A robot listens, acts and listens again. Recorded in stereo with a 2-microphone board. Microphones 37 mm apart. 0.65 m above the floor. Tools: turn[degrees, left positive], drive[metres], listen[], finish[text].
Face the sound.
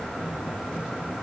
Action: listen[]
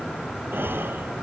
Action: turn[-90]
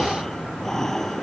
Thought: So it is at 10° left.
Action: turn[10]
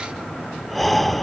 Action: finish[Found it: breathing, straight ahead.]